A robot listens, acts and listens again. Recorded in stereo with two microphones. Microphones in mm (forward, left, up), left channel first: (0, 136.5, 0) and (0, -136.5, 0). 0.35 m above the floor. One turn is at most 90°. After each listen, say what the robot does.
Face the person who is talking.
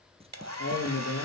Turn 60° left.
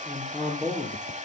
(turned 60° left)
Found it: a man speaking, straight ahead.